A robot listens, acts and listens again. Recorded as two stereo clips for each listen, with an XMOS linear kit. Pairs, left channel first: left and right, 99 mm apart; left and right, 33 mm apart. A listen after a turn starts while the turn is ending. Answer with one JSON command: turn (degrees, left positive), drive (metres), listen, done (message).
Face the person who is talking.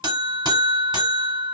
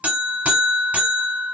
{"listen": true}
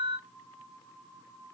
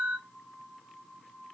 {"listen": true}
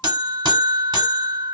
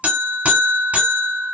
{"done": "I can't make out anyone speaking to turn to."}